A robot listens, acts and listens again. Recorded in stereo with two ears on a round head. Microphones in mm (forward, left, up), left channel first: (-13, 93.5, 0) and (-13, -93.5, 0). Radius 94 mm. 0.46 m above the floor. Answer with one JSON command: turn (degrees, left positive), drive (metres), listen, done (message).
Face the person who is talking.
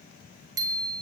{"listen": true}
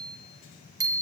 {"listen": true}
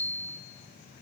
{"done": "I can't make out anyone speaking, only a bicycle bell."}